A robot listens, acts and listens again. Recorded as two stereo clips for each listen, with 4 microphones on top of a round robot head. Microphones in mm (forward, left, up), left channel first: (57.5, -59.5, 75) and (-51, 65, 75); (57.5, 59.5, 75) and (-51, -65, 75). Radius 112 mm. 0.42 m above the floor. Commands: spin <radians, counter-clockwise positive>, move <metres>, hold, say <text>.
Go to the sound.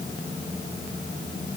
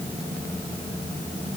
hold
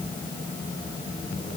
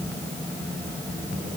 hold
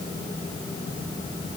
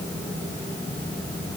say I can't make out anything to turn to.